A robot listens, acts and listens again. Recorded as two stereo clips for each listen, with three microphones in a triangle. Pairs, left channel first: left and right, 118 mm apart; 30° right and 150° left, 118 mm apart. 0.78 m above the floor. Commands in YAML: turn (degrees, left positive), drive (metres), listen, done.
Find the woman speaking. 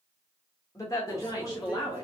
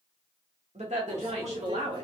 turn: 140
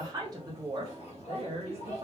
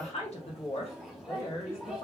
turn: -60
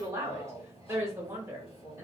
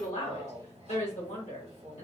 turn: -20
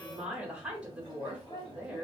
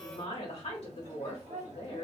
done: "Facing the woman speaking, 1 to 2 m away."